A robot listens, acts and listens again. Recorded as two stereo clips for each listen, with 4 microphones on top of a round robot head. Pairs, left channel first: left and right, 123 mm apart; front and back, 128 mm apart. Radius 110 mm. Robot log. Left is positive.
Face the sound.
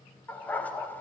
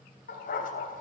note: The dog barking: 15° left.
cmd yaw +15
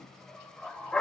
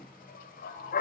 end: Found it: a dog barking, straight ahead.